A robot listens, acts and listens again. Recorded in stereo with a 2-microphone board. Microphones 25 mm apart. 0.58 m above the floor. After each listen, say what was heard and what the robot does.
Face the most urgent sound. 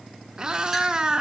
Keep listening.
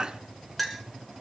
Keep listening.
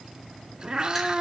I can't make out anything urgent, only a cat meowing and a clink.